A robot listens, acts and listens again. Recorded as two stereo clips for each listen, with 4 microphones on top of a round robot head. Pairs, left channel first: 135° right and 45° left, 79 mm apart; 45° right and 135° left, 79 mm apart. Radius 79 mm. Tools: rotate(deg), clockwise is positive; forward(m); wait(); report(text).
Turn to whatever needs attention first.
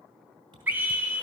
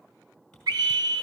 rotate(-110)
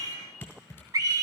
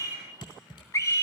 report("Facing the scream.")